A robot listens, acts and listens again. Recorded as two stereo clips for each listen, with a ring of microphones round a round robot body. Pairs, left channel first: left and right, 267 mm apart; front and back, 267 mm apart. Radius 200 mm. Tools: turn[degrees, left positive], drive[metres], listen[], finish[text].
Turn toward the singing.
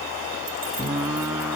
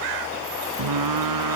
Thought: The singing: 175° right.
Action: turn[-175]
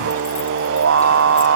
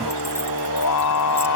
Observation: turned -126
Thought: The singing is now 50° right.
Action: turn[-50]
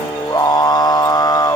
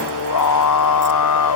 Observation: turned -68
Thought: The singing is now 15° left.
Action: turn[15]
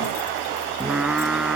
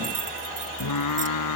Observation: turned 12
Action: finish[Found it: singing, straight ahead.]